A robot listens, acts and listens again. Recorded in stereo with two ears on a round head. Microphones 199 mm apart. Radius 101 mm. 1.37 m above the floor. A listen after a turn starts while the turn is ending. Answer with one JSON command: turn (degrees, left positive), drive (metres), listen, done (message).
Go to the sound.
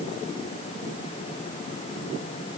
{"listen": true}
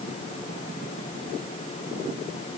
{"listen": true}
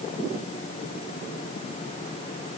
{"done": "I can't make out anything to turn to."}